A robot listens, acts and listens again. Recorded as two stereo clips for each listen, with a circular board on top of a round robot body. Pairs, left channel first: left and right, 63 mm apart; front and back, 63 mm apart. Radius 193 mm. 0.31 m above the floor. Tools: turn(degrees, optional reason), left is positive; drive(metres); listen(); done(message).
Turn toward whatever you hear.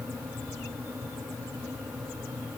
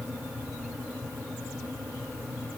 listen()
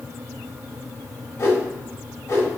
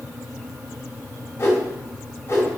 turn(degrees=45, reason="The whoosh: 45° left.")
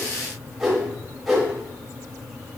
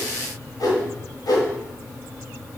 done("Found it: a whoosh, straight ahead.")